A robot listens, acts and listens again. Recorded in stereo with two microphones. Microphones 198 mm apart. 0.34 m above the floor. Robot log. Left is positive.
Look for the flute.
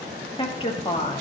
cmd idle
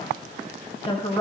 cmd idle
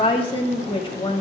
end: I can't make out a flute, only a woman speaking.